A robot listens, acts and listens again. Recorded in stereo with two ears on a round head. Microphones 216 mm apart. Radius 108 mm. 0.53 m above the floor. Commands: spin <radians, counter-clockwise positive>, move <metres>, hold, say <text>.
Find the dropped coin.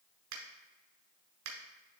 hold
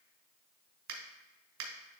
hold
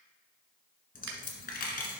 spin 0.70
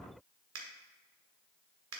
hold
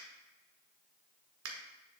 say I heard a dropped coin, but can't make it out now. It was about straight ahead or 100° left.